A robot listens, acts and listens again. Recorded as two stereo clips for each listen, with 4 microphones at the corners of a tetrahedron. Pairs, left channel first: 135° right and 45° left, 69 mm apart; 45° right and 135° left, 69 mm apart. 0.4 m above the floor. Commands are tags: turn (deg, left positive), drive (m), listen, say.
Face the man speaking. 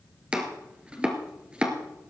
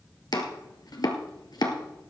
<listen/>
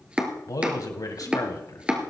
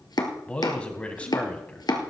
<turn deg="-115"/>
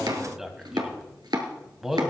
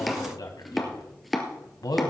<turn deg="-40"/>
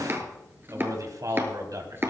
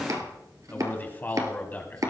<turn deg="15"/>
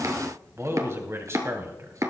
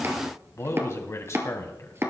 <say>Facing the man speaking.</say>